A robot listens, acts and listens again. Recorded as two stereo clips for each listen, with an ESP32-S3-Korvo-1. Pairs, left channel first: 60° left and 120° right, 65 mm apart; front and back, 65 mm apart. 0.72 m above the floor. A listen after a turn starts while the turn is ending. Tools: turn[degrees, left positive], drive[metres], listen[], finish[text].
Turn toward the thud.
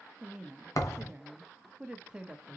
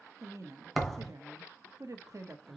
Thought: The thud: 90° left.
Action: turn[90]
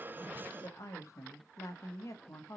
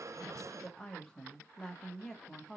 Action: finish[Facing where the thud came from. I can't hear it now.]